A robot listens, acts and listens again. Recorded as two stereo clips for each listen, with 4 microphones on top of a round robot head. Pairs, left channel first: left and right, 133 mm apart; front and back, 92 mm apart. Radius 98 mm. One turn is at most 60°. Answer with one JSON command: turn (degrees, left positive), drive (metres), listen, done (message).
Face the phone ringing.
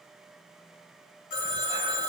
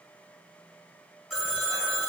{"turn": 60}
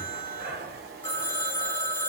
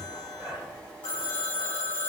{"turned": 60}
{"turn": 35}
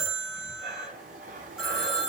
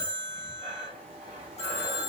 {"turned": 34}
{"done": "Found it: a phone ringing, straight ahead."}